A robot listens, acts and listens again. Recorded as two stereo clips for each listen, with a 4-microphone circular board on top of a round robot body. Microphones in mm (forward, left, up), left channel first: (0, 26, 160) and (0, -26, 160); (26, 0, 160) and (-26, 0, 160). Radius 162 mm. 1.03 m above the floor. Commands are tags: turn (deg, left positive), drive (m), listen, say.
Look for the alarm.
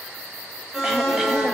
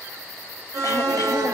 <turn deg="180"/>
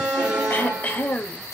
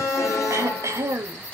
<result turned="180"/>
<turn deg="-20"/>
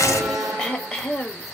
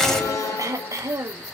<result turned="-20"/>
<say>Facing the alarm, 2 to 4 m away.</say>